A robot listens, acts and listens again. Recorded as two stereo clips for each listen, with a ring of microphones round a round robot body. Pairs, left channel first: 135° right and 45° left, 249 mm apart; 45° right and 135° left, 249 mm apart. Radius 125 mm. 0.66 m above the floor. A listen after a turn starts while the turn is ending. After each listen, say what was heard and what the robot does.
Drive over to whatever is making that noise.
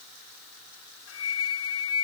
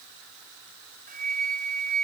The flute: 165° right. Turn 165° right.
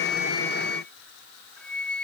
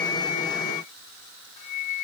The flute is now 50° right. Turn 50° right.
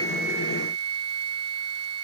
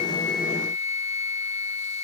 The flute is now 20° left. Turn 20° left.
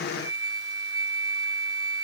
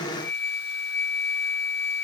Drive 1.0 m forward.
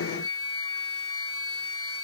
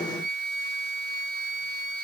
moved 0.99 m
The flute is now 10° left. Turn 10° left.
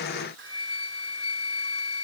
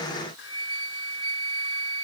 Drive 1.0 m forward.
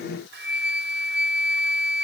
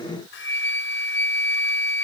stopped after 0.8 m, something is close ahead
Arrived at the flute, straight ahead.